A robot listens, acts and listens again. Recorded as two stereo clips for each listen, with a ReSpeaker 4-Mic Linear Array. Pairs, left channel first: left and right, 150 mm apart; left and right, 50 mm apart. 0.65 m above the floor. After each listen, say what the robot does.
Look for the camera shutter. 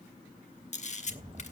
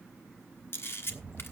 Turn 55° left.
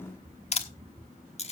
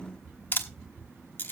Turn 55° left.
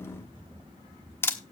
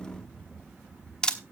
Turn 20° left.
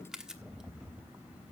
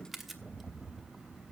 Facing the camera shutter, 1 to 2 m away.